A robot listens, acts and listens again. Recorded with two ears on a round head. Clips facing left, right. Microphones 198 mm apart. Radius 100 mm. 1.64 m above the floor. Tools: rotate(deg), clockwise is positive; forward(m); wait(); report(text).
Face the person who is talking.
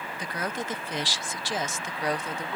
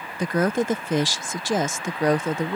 rotate(40)
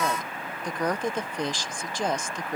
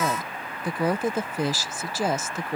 report("Found it: a woman speaking, straight ahead.")